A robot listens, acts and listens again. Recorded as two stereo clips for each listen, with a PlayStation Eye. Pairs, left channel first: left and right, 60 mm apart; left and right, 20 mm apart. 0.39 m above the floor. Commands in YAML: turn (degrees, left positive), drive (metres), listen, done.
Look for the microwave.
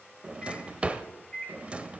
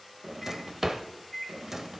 turn: 30
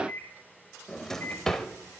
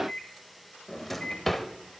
turn: 135
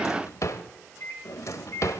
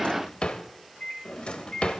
turn: 55
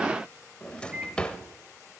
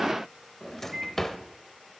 turn: -20
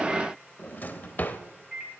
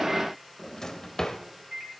done: "Found it: a microwave, straight ahead."